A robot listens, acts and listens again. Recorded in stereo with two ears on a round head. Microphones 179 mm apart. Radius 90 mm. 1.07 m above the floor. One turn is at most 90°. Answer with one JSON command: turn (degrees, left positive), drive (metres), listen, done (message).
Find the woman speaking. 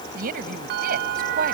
{"turn": -45}
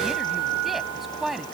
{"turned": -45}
{"done": "Facing the woman speaking."}